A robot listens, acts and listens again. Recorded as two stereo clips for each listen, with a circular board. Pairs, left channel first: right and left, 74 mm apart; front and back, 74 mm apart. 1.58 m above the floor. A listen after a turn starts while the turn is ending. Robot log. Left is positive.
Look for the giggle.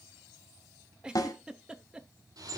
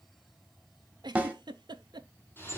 note: The giggle: 170° left.
cmd yaw +170
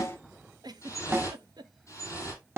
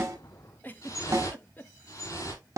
note: The giggle is now 65° left.
cmd yaw +65
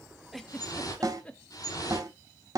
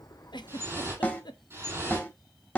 note: The giggle is now 15° right.
cmd yaw -15
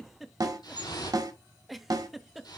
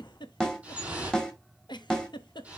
end: Facing the giggle.